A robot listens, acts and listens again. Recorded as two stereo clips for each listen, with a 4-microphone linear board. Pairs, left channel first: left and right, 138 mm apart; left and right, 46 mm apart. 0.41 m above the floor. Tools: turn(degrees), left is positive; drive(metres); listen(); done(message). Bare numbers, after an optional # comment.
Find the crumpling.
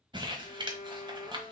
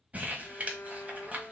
# The crumpling: about 35° right or 145° right.
turn(-35)
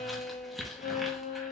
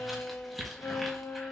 done("Found it: crumpling, straight ahead.")